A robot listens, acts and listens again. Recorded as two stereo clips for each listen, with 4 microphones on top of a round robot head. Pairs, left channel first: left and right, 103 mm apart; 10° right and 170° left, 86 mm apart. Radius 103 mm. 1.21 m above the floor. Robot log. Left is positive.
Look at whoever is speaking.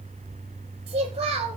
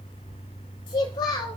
note: The child speaking: 45° right.
cmd yaw -45
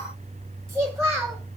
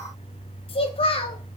end: Found it: a child speaking, straight ahead.